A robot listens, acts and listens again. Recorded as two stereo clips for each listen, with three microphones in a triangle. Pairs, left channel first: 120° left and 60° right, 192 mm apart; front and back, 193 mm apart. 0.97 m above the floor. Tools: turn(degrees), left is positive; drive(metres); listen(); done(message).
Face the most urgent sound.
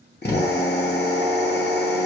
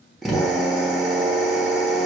listen()
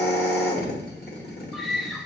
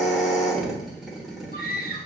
turn(degrees=30)
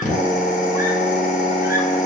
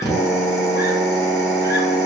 listen()
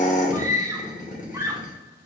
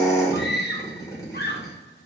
turn(degrees=15)
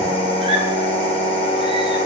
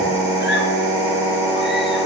listen()
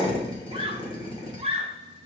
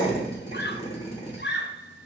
done("Facing the scream.")